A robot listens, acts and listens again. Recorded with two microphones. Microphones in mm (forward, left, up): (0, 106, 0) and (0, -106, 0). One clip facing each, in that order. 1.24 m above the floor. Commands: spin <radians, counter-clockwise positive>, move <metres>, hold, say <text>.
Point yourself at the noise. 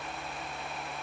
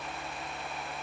hold
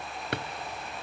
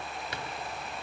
spin 1.22
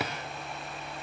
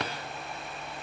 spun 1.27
say Found it: a drawer, straight ahead.